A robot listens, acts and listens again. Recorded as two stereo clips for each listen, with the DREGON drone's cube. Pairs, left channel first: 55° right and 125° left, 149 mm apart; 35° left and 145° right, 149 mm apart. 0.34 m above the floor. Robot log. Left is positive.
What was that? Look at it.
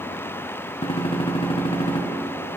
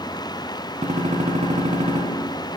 note: The gunshot: 105° right.
cmd yaw -105
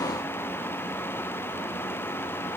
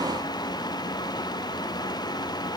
end: Facing where the gunshot came from. I can't hear it now.